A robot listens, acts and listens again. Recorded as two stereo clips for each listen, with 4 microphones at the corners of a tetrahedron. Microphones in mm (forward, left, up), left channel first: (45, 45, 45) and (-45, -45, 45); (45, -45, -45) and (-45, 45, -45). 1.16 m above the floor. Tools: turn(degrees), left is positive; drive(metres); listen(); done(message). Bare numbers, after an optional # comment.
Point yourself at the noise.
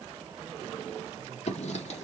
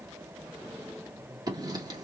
# The writing: 75° left.
turn(75)
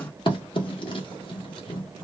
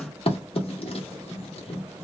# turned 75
done("Found it: writing, straight ahead, 1 to 2 m away.")